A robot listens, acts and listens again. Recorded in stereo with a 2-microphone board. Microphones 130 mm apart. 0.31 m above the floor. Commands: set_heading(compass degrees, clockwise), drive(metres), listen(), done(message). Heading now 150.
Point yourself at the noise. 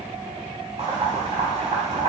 set_heading(200)
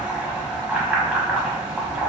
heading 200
set_heading(210)
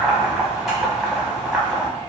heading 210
done("Facing the boiling, under 1 m away.")